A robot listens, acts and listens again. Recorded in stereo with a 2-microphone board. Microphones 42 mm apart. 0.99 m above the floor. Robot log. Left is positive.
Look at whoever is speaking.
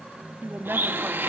note: The woman speaking: about 55° right or 125° right.
cmd yaw -55
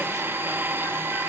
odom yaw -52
cmd idle
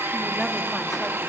cmd idle
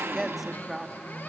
end: Facing the woman speaking, 1 to 2 m away.